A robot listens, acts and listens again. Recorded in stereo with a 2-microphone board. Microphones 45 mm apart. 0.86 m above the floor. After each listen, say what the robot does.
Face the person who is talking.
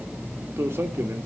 Turn 65° right.
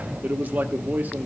Turn 45° right.
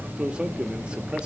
Turn 25° right.
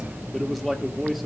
Found it: a man speaking, straight ahead, 1 to 2 m away.